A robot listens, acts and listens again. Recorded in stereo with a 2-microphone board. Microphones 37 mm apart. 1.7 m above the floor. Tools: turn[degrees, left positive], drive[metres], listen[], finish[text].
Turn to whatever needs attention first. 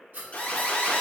Thought: The alarm: about 40° left or 140° left.
Action: turn[40]
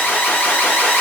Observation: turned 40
Thought: So it is at 100° left.
Action: turn[100]
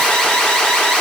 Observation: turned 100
Thought: The alarm is now 20° left.
Action: turn[20]
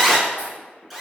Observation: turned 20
Action: finish[Found it: an alarm, straight ahead, under 1 m away.]